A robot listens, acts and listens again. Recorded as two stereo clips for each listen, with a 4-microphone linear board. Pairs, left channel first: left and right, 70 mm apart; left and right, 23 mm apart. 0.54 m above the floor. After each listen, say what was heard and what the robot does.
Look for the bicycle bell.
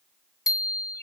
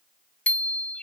Turn 90° left.
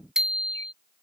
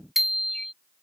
So it is at 10° right. Turn 10° right.
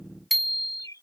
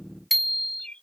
Facing the bicycle bell.